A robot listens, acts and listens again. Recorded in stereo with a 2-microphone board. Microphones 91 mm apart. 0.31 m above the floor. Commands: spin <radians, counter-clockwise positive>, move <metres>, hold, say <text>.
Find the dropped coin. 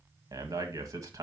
hold
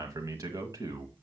hold
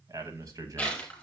spin 0.52
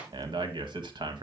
hold
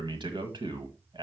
say I heard a dropped coin, but can't make it out now. It was about 20° right or 140° left.